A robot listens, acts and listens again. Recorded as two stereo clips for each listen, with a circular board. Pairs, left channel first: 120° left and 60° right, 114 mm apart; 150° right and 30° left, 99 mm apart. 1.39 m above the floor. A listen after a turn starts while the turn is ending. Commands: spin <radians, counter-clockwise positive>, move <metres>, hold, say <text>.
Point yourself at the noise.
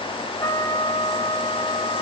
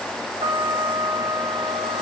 spin 1.13
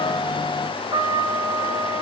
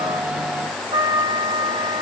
say Facing the trumpet, 2 to 4 m away.